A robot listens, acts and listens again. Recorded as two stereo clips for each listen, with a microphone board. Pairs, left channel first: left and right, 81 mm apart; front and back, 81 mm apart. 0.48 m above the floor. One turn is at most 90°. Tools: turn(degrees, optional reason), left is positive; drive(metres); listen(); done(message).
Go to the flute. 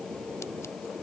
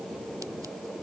listen()
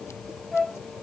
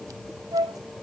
turn(degrees=90, reason="The flute: 175° left.")
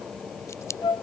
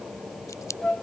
turn(degrees=75, reason="The flute is now 75° left.")
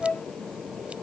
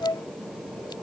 turn(degrees=20, reason="The flute is now 20° left.")
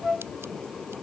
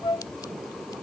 drive(metres=1.0)
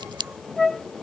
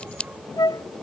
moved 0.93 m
drive(metres=1.0)
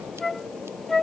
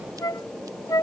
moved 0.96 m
drive(metres=1.0)
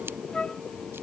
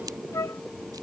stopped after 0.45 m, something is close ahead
turn(degrees=15, reason="The flute is now 15° left.")
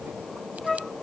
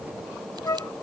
done("Arrived at the flute, straight ahead.")